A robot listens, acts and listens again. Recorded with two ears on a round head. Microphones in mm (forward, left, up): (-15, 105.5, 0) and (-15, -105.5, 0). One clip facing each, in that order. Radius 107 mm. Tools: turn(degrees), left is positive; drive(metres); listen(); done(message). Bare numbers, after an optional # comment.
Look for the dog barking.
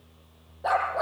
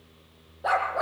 turn(30)
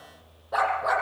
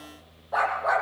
# So it is at 140° left.
turn(140)
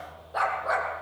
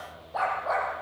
# The dog barking is now 20° left.
turn(20)
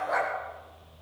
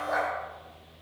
done("Found it: a dog barking, straight ahead, over 4 m away.")